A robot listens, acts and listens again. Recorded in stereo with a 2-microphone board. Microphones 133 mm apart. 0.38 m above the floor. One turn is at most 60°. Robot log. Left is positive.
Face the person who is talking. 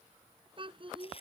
note: The child speaking: about 40° right or 140° right.
cmd yaw -40
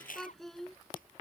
end: Found it: a child speaking, straight ahead.